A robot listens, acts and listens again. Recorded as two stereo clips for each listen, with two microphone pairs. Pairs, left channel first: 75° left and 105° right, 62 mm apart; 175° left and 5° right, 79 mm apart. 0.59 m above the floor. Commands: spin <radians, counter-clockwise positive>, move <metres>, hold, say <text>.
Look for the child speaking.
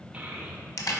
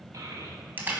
spin -0.61
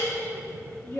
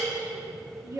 spin 0.70
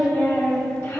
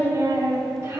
spin 0.79
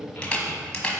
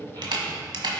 spin 0.35
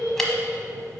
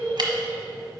spin 0.17
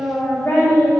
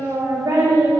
say Found it: a child speaking, straight ahead, 2 to 4 m away.